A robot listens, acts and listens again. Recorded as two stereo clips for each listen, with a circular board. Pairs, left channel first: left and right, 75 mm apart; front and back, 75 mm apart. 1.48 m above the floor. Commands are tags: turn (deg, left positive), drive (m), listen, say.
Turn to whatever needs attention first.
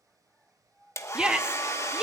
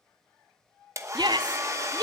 <turn deg="-165"/>
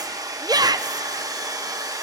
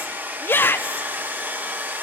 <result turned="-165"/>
<turn deg="-60"/>
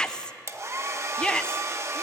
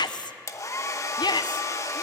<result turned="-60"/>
<turn deg="15"/>
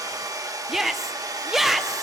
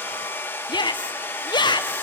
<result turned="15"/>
<say>Facing the shout, under 1 m away.</say>